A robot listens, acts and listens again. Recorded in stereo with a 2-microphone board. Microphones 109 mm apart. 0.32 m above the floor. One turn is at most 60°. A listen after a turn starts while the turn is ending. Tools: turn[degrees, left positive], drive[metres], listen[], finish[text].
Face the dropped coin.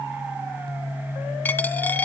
Thought: The dropped coin: about 15° left or 165° left.
Action: turn[15]
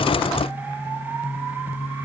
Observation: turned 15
Action: listen[]
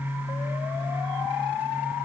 Action: finish[I heard a dropped coin, but can't make it out now. It was about straight ahead or 150° left.]